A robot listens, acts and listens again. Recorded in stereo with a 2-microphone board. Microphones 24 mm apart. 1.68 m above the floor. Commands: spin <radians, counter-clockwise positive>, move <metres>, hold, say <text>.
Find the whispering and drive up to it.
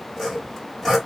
hold
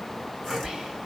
spin -0.26
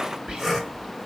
spin -2.53
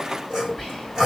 move 1.0
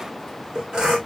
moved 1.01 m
hold
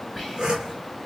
move 1.0
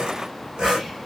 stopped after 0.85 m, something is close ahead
hold
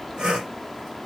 hold
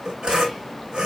say I heard whispering from this way, but can't make it out now. I did not reach it.